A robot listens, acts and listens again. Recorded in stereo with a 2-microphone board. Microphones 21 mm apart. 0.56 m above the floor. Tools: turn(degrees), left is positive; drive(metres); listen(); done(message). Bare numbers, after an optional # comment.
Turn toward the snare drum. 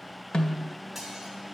# The snare drum: about 55° left or 125° left.
turn(55)
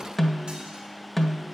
done("Facing the snare drum.")